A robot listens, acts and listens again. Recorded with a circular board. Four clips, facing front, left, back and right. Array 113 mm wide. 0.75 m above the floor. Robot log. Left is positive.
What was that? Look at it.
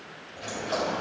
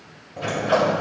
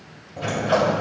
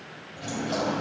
note: The sliding door: 120° left.
cmd yaw +120
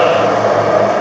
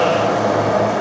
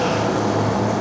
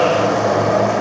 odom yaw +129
note: The sliding door is now 10° right.
cmd yaw -10
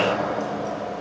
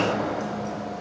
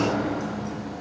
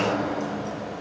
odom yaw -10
end: Found it: a sliding door, straight ahead, 2 to 4 m away.